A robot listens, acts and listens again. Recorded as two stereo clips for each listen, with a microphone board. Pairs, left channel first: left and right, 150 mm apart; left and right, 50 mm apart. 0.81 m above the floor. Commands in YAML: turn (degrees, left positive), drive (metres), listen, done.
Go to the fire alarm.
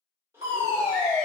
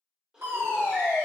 turn: -55
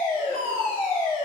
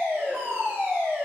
turn: -50
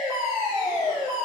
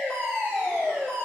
drive: 1.0
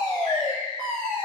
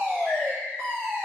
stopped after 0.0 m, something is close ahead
done: "Blocked. The fire alarm is further on, straight ahead."